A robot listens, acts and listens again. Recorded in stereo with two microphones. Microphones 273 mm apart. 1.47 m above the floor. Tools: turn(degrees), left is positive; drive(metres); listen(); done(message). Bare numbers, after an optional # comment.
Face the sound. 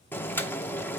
turn(30)
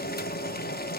# So it is at 140° left.
turn(140)
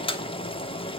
# The boiling is now 20° left.
turn(20)
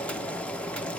done("Found it: boiling, straight ahead, under 1 m away.")